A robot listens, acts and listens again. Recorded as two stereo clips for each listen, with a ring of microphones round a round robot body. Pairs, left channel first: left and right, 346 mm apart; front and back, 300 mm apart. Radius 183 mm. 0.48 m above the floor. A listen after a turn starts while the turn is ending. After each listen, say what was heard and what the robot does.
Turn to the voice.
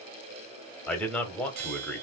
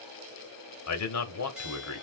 Facing the man speaking, 1 to 2 m away.